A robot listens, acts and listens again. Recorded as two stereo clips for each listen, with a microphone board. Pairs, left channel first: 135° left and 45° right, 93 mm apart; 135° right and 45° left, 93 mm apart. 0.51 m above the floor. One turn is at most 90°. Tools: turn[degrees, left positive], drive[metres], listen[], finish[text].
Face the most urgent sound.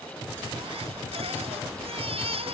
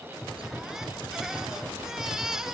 Thought: The baby crying: 40° right.
Action: turn[-40]
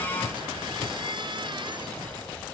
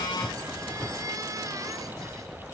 Thought: The baby crying is now 10° right.
Action: turn[-10]
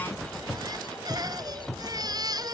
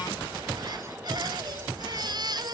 Action: finish[Found it: a baby crying, straight ahead.]